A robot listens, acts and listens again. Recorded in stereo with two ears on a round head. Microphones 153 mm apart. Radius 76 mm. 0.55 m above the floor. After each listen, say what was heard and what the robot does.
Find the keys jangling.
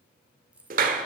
Turn 30° right.
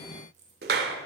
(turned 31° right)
So it is at 135° right. Turn 135° right.
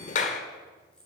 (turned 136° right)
Found it: keys jangling, straight ahead.